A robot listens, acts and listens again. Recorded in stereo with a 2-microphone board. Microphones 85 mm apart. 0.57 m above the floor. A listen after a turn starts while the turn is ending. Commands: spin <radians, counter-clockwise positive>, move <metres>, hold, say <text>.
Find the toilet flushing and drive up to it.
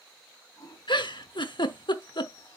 spin 0.79
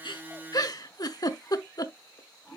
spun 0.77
move 1.0
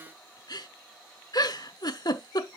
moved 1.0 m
hold
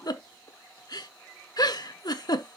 move 1.0
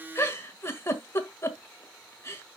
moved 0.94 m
hold
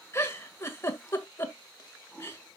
move 1.0
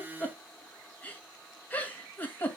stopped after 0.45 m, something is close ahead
hold
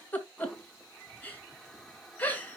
say Arrived at the toilet flushing, straight ahead.